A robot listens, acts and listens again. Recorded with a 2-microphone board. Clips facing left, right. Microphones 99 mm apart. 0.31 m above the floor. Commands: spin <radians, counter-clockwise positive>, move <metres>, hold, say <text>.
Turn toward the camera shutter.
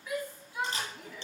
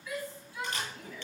spin 0.52
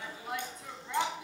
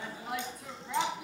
hold
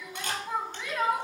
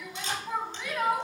spin 2.18
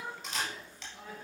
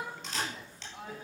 say Facing the camera shutter, 2 to 4 m away.